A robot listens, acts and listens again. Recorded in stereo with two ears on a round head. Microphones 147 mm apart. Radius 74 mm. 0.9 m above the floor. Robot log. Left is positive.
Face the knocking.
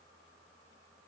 cmd idle
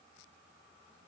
cmd idle
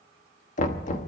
note: The knocking: about 50° left or 130° left.
cmd yaw +50
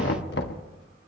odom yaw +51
note: So it is at 75° left.
cmd yaw +75
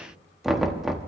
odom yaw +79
end: Found it: knocking, straight ahead.